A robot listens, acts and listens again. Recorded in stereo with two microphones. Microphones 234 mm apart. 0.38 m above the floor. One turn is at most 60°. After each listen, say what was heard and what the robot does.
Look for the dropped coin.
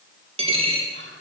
The dropped coin: about 25° right or 155° right. Turn 25° right.
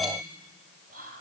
Keep listening.
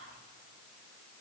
I heard a dropped coin, but can't make it out now. It was about straight ahead or 130° right.